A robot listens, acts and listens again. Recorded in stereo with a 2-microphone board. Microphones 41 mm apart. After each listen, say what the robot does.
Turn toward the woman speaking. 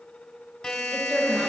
Turn 15° right.
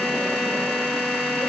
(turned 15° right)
Keep listening.
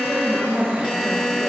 Turn 25° right.
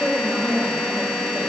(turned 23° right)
Turn 30° right.
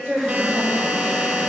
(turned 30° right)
Turn 30° right.
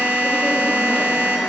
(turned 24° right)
Keep listening.
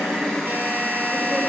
Keep listening.
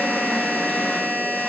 I heard a woman speaking, but can't make it out now. It was about 5° right or 125° right.